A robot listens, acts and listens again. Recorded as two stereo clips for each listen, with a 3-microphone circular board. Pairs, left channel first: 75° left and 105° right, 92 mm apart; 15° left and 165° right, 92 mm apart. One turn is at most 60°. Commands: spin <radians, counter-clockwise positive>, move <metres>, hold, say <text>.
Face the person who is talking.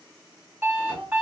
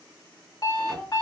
spin -1.05
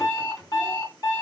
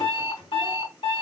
spin -1.05
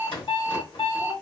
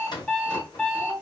spin 0.17
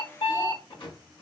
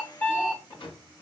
hold
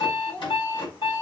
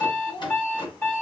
say Facing the child speaking, 1 to 2 m away.